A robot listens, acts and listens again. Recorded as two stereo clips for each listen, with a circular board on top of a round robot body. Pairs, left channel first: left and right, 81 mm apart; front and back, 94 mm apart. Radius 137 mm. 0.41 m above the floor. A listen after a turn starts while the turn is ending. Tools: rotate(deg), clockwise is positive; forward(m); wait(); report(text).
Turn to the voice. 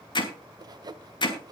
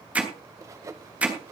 wait()
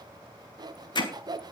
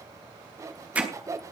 wait()
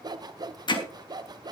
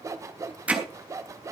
report("I can't make out anyone speaking, only hammering and sawing.")